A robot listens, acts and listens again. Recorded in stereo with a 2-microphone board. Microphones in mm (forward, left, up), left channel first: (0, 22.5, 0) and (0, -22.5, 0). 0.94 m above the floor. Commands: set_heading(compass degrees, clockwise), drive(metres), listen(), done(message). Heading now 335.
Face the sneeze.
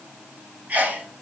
set_heading(10)
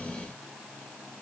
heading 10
listen()
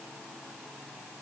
done("I heard a sneeze, but can't make it out now. It was about straight ahead or 110° right.")